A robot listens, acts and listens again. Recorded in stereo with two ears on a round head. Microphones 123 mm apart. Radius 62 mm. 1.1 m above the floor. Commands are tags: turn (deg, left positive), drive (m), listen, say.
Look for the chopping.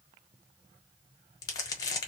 <listen/>
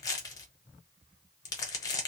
<listen/>
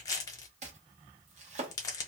<turn deg="-50"/>
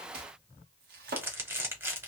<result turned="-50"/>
<turn deg="-80"/>
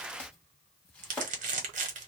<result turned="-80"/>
<turn deg="10"/>
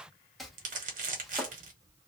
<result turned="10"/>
<say>Facing the chopping.</say>